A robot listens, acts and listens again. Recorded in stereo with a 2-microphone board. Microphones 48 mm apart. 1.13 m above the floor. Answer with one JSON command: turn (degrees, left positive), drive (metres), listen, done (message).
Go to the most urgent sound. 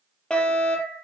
{"turn": 20}
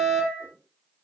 {"drive": 1.0}
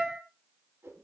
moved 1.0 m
{"drive": 1.0}
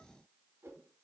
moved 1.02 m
{"listen": true}
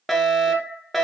{"drive": 1.0}
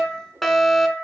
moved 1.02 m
{"drive": 1.0}
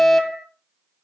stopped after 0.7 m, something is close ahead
{"done": "Arrived at the fire alarm, straight ahead."}